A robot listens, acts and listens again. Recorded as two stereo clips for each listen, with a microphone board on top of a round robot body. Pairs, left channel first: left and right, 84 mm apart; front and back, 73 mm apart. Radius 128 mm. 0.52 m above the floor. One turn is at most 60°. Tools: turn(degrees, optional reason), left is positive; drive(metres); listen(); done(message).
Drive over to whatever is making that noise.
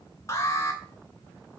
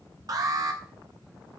turn(degrees=60, reason="The alarm: 145° left.")
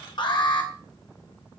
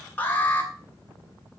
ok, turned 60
turn(degrees=60, reason="The alarm is now 65° left.")
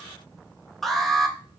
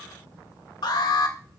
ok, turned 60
drive(metres=1.0)
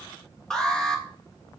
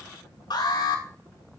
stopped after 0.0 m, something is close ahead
turn(degrees=10, reason="The alarm is now 10° left.")
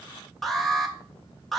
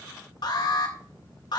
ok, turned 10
done("Something is in my way. I am facing the alarm but have not reached it.")